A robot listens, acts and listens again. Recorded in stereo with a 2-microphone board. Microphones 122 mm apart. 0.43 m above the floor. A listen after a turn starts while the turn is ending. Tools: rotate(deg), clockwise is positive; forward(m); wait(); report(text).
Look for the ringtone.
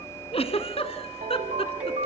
rotate(75)
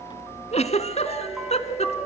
report("Found it: a ringtone, straight ahead.")